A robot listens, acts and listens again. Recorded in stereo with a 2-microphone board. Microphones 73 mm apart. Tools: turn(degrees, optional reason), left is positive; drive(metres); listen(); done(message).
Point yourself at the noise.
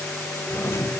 turn(degrees=35, reason="The doorbell: about 35° left or 145° left.")
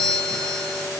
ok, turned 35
done("Found it: a doorbell, straight ahead.")